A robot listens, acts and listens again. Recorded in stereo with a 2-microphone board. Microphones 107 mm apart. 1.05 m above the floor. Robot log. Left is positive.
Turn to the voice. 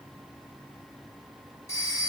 cmd idle
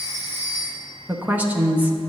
cmd yaw -30
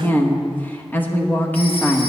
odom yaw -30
note: So it is at 20° left.
cmd yaw +20
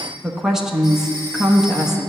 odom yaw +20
end: Facing the woman speaking, 1 to 2 m away.